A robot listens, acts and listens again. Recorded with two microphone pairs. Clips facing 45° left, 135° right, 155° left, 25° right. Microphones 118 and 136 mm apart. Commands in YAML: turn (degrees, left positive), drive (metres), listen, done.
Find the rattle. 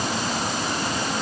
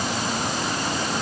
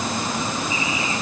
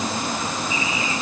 listen: true
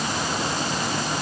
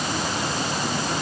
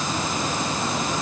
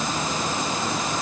listen: true
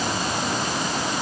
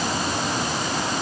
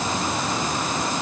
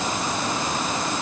done: "I can't make out a rattle."